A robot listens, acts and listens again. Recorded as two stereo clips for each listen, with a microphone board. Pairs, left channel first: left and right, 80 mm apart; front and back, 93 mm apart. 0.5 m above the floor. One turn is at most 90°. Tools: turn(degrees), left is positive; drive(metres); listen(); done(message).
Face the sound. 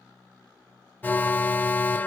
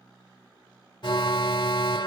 turn(degrees=25)
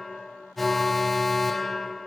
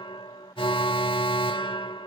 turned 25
done("Facing the alarm.")